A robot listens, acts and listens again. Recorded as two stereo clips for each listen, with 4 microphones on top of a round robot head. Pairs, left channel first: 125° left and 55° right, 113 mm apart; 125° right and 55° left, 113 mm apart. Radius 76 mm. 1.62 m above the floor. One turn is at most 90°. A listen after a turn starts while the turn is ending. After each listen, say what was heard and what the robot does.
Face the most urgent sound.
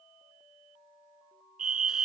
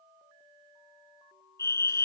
The fire alarm: 55° right. Turn 55° right.
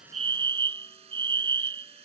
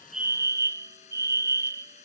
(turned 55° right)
Facing the fire alarm.